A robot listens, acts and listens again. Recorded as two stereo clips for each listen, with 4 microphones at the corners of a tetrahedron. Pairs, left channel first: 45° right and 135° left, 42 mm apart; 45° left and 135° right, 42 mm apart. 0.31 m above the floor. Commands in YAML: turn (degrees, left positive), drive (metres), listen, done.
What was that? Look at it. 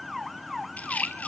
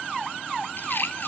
turn: 10
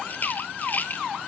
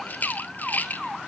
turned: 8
done: "Facing the rattle, 1 to 2 m away."